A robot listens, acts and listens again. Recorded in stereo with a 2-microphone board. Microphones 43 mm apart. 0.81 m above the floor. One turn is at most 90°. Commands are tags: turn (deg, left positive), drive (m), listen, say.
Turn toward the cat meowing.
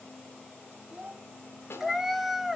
<turn deg="-30"/>
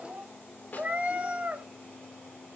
<turn deg="-90"/>
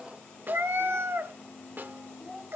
<turn deg="-60"/>
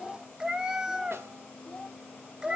<turn deg="-15"/>
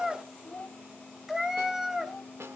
<say>Found it: a cat meowing, straight ahead, under 1 m away.</say>